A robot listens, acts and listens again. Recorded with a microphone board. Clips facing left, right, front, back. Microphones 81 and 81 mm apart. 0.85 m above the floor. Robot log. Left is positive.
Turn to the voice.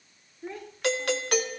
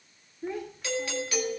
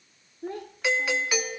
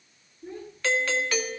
end: Facing the child speaking, 2 to 4 m away.